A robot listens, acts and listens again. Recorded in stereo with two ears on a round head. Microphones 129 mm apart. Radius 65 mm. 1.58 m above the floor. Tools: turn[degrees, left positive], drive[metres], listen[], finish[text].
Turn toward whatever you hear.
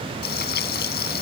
Thought: The frying: about 75° left or 105° left.
Action: turn[75]
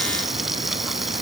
Action: finish[Facing the frying.]